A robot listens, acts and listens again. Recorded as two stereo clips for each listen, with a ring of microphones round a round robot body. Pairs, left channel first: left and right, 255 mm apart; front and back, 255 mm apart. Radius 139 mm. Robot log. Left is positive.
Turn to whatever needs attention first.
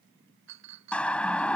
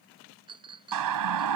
note: The siren: 175° left.
cmd yaw +175
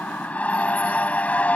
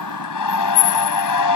end: Facing the siren.